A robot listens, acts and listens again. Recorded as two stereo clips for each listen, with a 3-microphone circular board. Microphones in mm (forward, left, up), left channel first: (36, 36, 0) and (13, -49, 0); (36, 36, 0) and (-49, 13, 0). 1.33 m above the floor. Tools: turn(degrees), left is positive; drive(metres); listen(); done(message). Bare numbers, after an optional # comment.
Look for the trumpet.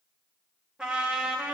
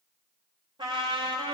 # The trumpet: 175° left.
turn(175)
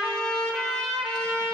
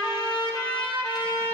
done("Facing the trumpet, 1 to 2 m away.")